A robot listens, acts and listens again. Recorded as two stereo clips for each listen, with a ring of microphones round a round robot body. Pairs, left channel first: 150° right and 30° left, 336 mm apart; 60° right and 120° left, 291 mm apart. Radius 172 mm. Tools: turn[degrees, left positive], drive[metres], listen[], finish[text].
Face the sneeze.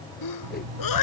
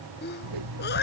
Thought: The sneeze: 120° right.
Action: turn[-120]
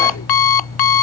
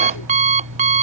Action: finish[Facing where the sneeze came from. I can't hear it now.]